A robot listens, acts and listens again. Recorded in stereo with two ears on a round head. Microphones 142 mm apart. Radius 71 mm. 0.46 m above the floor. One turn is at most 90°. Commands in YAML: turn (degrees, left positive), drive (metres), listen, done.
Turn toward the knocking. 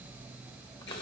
listen: true
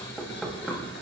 turn: 30
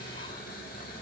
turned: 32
listen: true
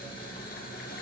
listen: true
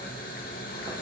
done: "I heard knocking, but can't make it out now. It was about 30° right or 145° left."